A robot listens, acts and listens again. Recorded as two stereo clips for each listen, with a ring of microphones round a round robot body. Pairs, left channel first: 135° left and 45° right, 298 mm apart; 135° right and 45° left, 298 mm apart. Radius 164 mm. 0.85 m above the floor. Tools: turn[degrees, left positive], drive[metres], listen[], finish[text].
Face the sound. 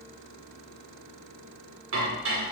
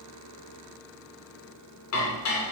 Thought: The dishes clattering: 95° right.
Action: turn[-95]
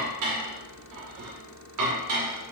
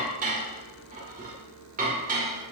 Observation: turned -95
Thought: The dishes clattering is now 20° right.
Action: turn[-20]
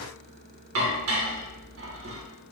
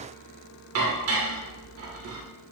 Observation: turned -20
Action: finish[Found it: dishes clattering, straight ahead.]